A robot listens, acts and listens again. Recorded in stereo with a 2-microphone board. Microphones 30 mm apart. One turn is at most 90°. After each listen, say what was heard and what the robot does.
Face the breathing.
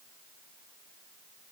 Keep listening.
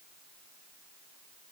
Keep listening.
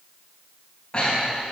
The breathing: about 35° left or 145° left. Turn 35° left.
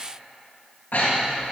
So it is at 110° left. Turn 90° left.
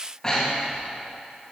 The breathing is now 25° left. Turn 25° left.
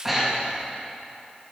Found it: breathing, straight ahead.